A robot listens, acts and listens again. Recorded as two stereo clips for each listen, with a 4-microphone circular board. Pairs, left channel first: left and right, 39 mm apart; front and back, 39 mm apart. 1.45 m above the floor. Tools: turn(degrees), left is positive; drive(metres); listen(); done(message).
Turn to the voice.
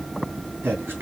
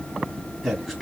turn(degrees=-100)
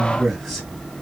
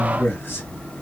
turn(degrees=-10)
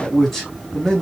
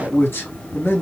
done("Found it: a man speaking, straight ahead.")